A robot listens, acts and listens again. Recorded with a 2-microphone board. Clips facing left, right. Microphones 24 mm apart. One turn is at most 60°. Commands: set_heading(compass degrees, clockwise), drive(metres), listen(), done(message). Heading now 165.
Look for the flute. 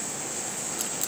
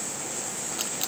listen()
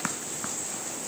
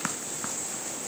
listen()
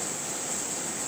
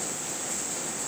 done("I can't make out a flute.")